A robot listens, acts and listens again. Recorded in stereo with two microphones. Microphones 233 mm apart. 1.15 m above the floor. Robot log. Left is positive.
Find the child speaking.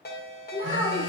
note: The child speaking: about 35° left or 145° left.
cmd yaw +35
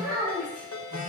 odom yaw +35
end: Found it: a child speaking, straight ahead.